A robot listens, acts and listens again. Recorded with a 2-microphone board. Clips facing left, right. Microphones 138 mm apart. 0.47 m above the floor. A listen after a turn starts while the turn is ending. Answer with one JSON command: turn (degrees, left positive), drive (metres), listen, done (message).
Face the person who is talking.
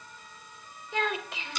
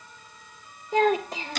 {"turn": -40}
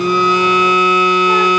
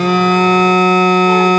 {"listen": true}
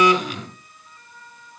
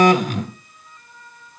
{"listen": true}
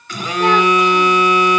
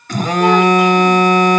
{"done": "I heard a child speaking, but can't make it out now. It was about straight ahead or 100° right."}